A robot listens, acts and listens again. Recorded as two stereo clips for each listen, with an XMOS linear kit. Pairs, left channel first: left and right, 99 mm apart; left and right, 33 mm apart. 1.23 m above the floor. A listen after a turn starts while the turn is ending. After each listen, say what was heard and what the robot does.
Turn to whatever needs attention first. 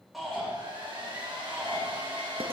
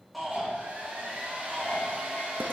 Turn 30° left.
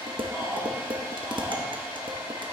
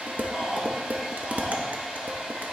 So it is at 30° right. Turn 30° right.
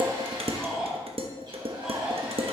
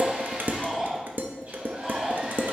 Facing the shout, 2 to 4 m away.